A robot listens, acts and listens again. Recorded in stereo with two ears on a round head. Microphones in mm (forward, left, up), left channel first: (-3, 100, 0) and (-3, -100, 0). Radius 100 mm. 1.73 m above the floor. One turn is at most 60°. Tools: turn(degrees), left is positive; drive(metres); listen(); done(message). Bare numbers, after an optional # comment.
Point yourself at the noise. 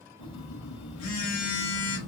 # The phone buzzing: about 65° left or 115° left.
turn(60)
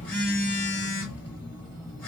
done("Facing the phone buzzing, 1 to 2 m away.")